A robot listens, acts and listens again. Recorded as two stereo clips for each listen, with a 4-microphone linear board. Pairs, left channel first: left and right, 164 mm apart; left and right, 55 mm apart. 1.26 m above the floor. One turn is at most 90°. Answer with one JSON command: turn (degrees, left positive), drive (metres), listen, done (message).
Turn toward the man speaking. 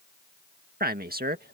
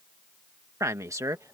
{"turn": -70}
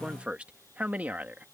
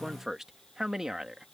{"turn": -10}
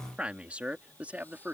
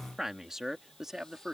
{"turn": -10}
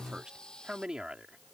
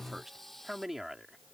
{"done": "Found it: a man speaking, straight ahead."}